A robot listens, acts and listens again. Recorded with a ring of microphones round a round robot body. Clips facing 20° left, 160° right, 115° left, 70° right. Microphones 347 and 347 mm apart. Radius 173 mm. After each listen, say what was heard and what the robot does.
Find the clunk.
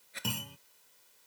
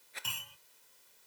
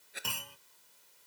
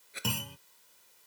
The clunk: 20° right. Turn 20° right.
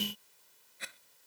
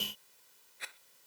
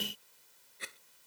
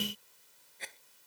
I heard a clunk from this way, but can't make it out now.